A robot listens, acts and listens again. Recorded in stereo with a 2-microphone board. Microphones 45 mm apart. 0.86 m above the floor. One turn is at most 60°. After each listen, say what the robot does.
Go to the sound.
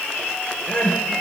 Turn 25° left.
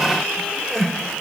Drive 1.0 m forward.
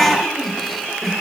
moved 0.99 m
Drive 1.0 m forward.
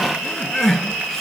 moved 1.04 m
Drive 1.0 m forward.
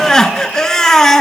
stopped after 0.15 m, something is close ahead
I am next to the crying.